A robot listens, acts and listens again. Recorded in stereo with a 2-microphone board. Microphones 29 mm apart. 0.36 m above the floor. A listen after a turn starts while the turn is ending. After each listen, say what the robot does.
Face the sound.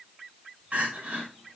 Turn 60° right.
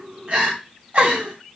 Turn 45° right.
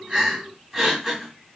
Turn 10° right.
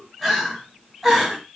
Found it: crying, straight ahead.